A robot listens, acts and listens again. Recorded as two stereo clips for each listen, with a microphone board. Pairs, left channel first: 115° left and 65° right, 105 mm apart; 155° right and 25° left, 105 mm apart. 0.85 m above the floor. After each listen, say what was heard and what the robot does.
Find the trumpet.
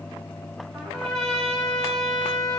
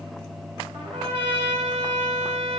The trumpet: 30° left. Turn 30° left.
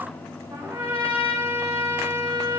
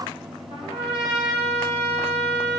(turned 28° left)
Facing the trumpet, 2 to 4 m away.